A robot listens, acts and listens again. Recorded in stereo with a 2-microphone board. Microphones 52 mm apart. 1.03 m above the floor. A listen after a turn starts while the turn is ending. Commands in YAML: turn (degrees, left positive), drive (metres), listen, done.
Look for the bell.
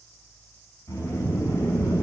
listen: true
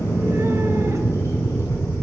listen: true
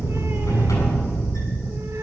done: "I can't make out a bell, only a sliding door."